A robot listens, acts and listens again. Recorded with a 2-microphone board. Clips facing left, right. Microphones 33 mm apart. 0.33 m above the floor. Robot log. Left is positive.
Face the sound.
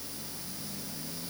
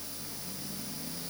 cmd idle
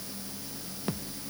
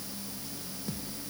note: The thud: about 45° left or 135° left.
cmd yaw +45
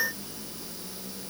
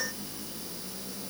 cmd idle
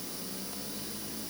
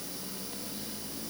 end: I heard a thud, but can't make it out now. It was about straight ahead or 90° left.